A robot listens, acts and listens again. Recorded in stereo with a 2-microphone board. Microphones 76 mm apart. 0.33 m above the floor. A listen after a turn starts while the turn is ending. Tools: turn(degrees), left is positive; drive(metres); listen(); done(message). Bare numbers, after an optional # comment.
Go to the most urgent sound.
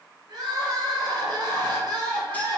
# The crying: about 65° right or 115° right.
turn(-65)
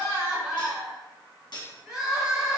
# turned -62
# So it is at 10° right.
turn(-10)
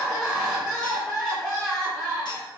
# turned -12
drive(1.0)
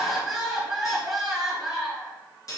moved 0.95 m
drive(1.0)
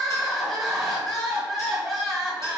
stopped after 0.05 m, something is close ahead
done("I am next to the crying.")